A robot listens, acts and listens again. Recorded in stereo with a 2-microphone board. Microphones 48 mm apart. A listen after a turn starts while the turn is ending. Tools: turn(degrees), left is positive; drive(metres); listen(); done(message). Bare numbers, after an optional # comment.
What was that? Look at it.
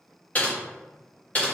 # The typing on a keyboard: about 30° left or 150° left.
turn(30)
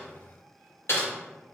# So it is at 120° left.
turn(120)
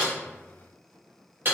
# The typing on a keyboard is now 45° right.
turn(-45)
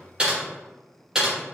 # The typing on a keyboard is now 15° right.
turn(-15)
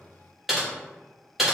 done("Found it: typing on a keyboard, straight ahead.")